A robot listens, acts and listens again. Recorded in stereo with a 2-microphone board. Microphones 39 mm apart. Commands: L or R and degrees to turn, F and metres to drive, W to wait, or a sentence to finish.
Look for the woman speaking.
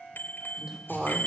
R30
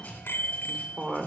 R150
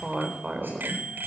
R15
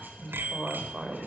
Found it: a woman speaking, straight ahead, over 4 m away.